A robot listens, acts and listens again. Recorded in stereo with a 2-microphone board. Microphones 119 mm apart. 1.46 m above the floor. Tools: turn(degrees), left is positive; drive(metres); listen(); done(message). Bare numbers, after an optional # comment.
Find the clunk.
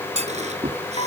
# The clunk: about 70° right or 110° right.
turn(-70)
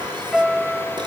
listen()
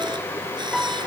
done("I heard a clunk, but can't make it out now. It was about straight ahead or 40° right.")